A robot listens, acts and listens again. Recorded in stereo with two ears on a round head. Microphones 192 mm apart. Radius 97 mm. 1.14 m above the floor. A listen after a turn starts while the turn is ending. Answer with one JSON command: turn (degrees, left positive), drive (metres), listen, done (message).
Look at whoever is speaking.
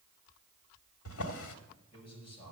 {"turn": 25}
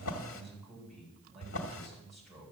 {"done": "Facing the man speaking, over 4 m away."}